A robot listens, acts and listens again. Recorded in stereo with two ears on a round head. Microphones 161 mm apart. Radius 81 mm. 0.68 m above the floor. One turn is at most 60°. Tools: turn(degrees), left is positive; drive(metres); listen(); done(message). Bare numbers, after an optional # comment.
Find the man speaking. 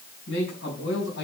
# The man speaking: about 70° left or 110° left.
turn(60)
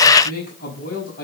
# So it is at 50° left.
turn(50)
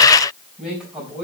done("Facing the man speaking.")